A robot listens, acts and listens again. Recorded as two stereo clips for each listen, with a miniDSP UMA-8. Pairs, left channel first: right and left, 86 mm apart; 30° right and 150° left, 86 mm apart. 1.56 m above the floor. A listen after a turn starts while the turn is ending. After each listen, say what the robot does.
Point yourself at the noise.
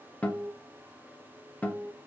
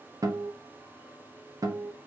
Turn 165° right.
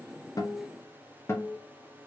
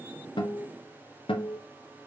Turn 30° right.
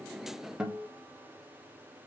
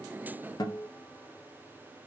Turn 10° left.
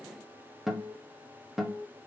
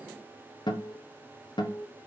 Found it: a guitar, straight ahead.